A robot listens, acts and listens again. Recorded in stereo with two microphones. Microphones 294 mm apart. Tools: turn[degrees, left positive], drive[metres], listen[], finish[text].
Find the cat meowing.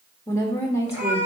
Action: turn[90]
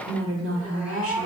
Action: finish[Facing the cat meowing, 2 to 4 m away.]